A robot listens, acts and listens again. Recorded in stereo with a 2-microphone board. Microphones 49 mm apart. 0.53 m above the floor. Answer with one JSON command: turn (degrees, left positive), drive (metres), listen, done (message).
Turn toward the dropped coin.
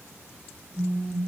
{"listen": true}
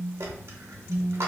{"turn": -65}
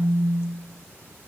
{"listen": true}
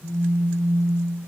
{"done": "I heard a dropped coin, but can't make it out now. It was about straight ahead or 50° right."}